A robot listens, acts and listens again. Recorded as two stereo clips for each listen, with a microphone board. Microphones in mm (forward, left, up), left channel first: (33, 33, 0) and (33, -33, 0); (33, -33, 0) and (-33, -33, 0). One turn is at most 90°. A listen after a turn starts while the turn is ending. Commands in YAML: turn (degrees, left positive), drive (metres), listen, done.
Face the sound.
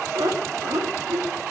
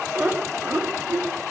turn: -90
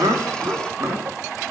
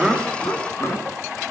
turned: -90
turn: -45
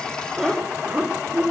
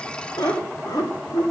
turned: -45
turn: -15
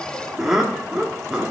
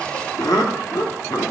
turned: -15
turn: -10
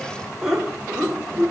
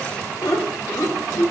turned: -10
turn: -10
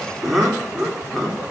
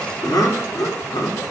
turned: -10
done: "Facing the laughter, 2 to 4 m away."